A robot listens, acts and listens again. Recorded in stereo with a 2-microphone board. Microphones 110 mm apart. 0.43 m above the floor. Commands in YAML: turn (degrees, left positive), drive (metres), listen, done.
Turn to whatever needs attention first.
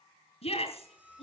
turn: 60
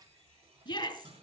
turn: 50
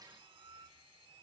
listen: true
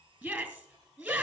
turn: -10
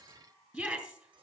done: "Found it: a shout, straight ahead."